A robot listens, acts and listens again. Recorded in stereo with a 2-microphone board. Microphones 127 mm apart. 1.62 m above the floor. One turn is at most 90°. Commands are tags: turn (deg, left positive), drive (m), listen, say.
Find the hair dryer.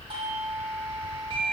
<listen/>
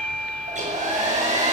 <turn deg="-75"/>
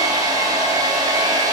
<turn deg="-30"/>
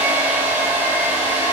<turn deg="-15"/>
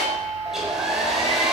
<say>Facing the hair dryer.</say>